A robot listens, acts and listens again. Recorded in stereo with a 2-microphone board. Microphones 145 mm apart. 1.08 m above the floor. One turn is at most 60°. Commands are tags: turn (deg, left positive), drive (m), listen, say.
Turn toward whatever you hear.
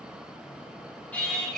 <turn deg="30"/>
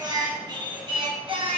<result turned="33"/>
<turn deg="-40"/>
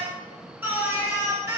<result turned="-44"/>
<turn deg="-20"/>
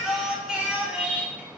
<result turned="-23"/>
<turn deg="-10"/>
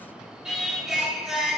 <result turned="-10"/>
<say>Found it: singing, straight ahead, 2 to 4 m away.</say>